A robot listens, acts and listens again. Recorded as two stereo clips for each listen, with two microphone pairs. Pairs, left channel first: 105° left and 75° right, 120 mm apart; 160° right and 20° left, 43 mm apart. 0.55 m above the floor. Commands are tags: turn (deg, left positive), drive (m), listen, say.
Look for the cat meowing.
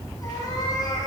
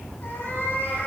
<turn deg="165"/>
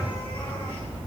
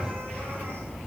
<listen/>
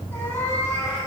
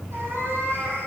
<turn deg="35"/>
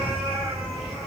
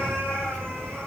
<turn deg="15"/>
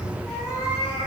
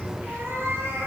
<say>Facing the cat meowing.</say>